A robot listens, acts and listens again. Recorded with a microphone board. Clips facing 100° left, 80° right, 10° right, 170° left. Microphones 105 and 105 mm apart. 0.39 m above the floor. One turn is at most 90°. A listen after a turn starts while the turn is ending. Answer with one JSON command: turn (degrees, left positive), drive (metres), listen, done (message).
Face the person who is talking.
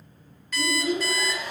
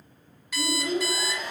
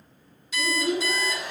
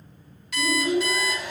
{"turn": -90}
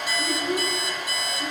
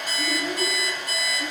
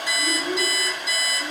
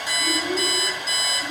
{"turn": -50}
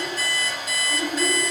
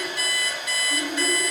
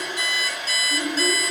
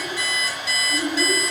{"turn": -10}
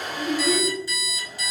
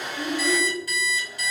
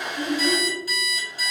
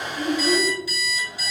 {"done": "Facing the child speaking."}